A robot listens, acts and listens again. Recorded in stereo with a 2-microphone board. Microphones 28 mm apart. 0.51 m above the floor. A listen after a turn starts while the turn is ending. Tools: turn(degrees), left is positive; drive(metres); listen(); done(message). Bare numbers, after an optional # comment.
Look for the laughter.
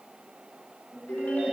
# The laughter: about 70° right or 110° right.
turn(-70)
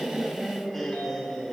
# So it is at 15° left.
turn(15)
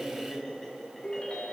# The laughter is now 10° left.
turn(10)
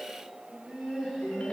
# The laughter is now 10° left.
turn(10)
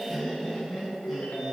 done("Found it: laughter, straight ahead.")